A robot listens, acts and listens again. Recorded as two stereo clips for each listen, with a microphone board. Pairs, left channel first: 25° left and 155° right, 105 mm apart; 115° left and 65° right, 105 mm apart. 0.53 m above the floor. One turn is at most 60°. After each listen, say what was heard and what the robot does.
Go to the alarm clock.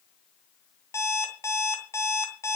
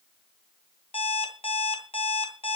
The alarm clock: 85° left. Turn 60° left.
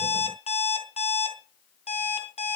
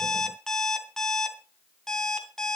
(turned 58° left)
The alarm clock is now 25° left. Turn 25° left.
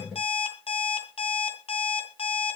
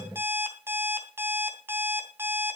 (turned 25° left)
Drive 1.0 m forward.
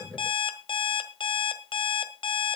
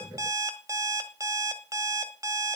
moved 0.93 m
The alarm clock is now 10° right. Turn 10° right.
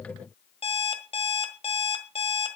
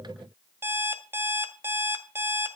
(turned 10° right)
Drive 1.0 m forward.
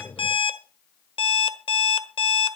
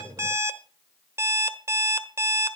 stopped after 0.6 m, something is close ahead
Arrived at the alarm clock, straight ahead.